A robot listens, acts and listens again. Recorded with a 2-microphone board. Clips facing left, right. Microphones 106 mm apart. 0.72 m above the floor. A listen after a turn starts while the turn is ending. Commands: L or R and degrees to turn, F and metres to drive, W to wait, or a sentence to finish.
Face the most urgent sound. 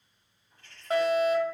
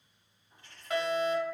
L40
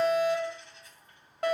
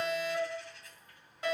L95
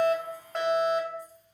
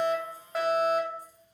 Found it: a fire alarm, straight ahead.